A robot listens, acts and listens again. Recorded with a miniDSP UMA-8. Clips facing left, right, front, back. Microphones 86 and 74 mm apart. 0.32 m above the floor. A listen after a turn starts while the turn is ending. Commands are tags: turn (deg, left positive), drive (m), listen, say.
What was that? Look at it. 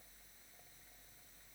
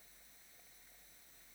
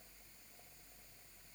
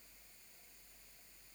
<listen/>
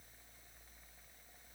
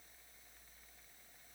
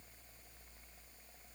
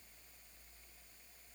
<listen/>
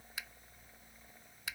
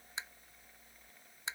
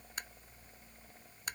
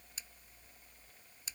<turn deg="-30"/>
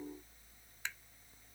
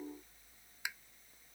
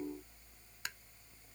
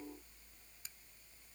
<turn deg="-10"/>
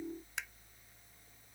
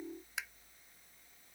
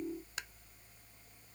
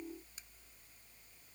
<say>Facing the tapping.</say>